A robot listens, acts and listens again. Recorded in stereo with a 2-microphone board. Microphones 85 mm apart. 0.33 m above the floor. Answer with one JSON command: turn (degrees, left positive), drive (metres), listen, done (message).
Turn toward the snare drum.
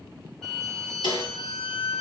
{"turn": 90}
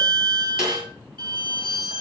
{"done": "Facing the snare drum, over 4 m away."}